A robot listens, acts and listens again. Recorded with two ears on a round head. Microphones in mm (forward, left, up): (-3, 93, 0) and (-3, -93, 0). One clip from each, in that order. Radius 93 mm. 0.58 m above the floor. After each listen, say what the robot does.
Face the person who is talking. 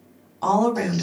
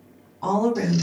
Turn 45° left.
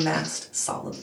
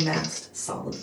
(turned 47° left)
Turn 80° left.
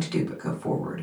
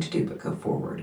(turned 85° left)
Found it: a woman speaking, straight ahead, 1 to 2 m away.